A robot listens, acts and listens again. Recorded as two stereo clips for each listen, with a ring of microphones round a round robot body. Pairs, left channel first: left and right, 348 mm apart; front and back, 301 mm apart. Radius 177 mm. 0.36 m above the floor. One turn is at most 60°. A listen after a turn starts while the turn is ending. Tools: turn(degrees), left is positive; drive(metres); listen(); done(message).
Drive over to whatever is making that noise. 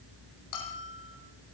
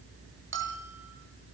turn(degrees=60)
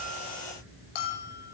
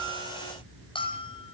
turn(degrees=60)
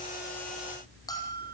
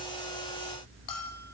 turn(degrees=10)
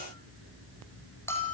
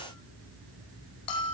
drive(metres=1.0)
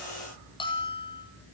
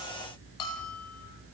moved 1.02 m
turn(degrees=15)
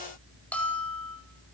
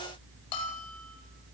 drive(metres=1.0)
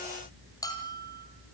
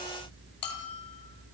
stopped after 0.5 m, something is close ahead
turn(degrees=10)
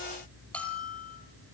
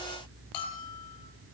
done("Something is in my way. I am facing the bell but have not reached it.")